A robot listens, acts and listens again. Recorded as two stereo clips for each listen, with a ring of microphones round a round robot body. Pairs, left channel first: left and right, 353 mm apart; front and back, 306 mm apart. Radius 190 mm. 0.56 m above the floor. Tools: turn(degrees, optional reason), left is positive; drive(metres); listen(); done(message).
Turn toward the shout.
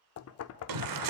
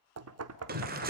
turn(degrees=-115, reason="The shout: 115° right.")
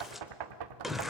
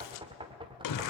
done("Facing the shout, 2 to 4 m away.")